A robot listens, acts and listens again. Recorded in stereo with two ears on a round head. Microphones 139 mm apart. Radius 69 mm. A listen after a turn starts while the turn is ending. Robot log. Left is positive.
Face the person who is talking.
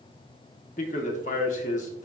note: The man speaking: about 50° left or 130° left.
cmd yaw +50
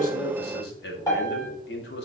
note: So it is at 80° left.
cmd yaw +80
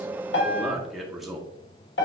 end: Found it: a man speaking, straight ahead.